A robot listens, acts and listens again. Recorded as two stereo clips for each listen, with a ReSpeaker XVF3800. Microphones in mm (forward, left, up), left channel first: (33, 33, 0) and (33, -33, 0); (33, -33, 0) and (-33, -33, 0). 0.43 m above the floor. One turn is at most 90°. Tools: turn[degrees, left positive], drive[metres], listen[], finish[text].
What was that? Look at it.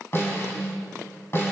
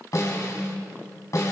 Thought: The snare drum: 40° left.
Action: turn[40]
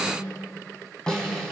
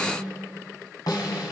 Thought: The snare drum is now 10° left.
Action: turn[10]
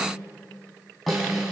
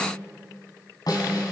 Action: finish[Found it: a snare drum, straight ahead, over 4 m away.]